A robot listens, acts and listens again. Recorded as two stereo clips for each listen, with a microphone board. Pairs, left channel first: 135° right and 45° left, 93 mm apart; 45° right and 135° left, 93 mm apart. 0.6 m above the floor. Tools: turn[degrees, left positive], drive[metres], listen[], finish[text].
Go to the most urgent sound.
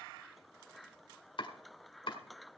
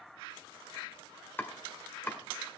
Action: listen[]
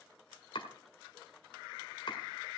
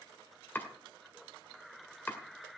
Action: listen[]
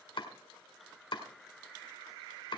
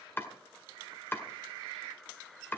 Action: finish[I can't make out anything urgent to turn to.]